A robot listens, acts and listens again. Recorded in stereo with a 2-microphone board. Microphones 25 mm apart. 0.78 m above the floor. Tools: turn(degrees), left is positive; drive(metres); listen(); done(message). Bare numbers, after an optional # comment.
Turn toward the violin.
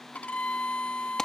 # The violin: about 65° left or 115° left.
turn(65)
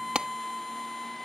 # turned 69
done("Found it: a violin, straight ahead.")